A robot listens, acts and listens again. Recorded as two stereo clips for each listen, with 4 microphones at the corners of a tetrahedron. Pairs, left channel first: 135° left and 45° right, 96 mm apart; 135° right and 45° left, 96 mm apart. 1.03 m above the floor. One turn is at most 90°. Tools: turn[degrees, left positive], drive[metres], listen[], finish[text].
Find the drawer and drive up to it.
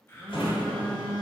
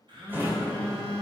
Thought: The drawer: 110° left.
Action: turn[90]
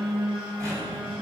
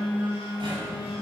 Thought: The drawer is now 10° left.
Action: turn[10]
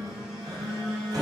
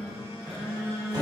Action: drive[1.0]
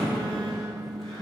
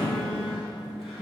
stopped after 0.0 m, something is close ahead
Action: finish[Something is in my way. I am facing the drawer but have not reached it.]